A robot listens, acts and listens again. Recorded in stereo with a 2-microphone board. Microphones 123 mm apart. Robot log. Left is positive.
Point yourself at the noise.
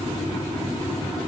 cmd idle
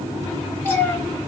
note: The cat meowing: about 15° left or 165° left.
cmd yaw +15
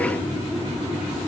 cmd idle
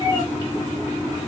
note: So it is at 145° left.
cmd yaw +145
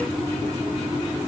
cmd idle
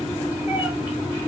cmd idle
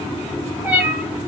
note: The cat meowing is now 15° right.
cmd yaw -15
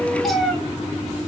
end: Found it: a cat meowing, straight ahead, under 1 m away.